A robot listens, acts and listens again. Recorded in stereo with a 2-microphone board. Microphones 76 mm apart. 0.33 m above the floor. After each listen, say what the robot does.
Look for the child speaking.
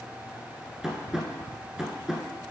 Keep listening.
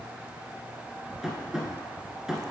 Keep listening.
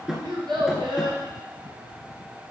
Turn 70° right.
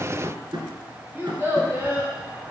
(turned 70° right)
Turn 30° right.
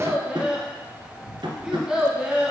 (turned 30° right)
Turn 10° right.
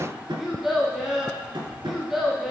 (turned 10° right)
Found it: a child speaking, straight ahead.